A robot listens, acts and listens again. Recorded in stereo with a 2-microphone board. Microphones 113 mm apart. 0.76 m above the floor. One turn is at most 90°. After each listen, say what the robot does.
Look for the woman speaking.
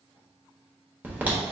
Keep listening.
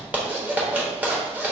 Keep listening.
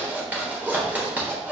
I can't make out a woman speaking to turn to.